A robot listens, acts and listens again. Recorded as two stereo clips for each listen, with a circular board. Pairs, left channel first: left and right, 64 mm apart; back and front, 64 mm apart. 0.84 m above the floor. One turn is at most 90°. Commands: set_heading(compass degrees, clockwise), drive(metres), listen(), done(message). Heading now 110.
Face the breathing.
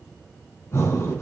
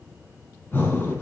set_heading(20)
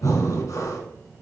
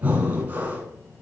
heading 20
set_heading(315)
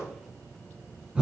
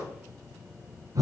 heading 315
set_heading(330)
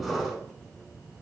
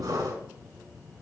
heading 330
done("Found it: breathing, straight ahead.")